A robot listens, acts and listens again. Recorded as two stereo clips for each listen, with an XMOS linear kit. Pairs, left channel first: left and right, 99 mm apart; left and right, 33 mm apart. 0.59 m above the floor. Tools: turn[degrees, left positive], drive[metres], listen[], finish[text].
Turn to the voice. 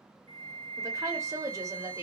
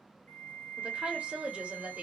Thought: The woman speaking: about 35° right or 145° right.
Action: turn[-35]
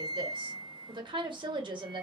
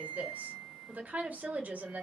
Thought: So it is at 105° right.
Action: turn[-105]
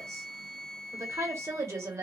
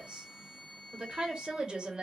Thought: The woman speaking is now 35° right.
Action: turn[-35]
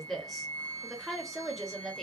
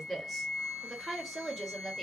Action: finish[Facing the woman speaking.]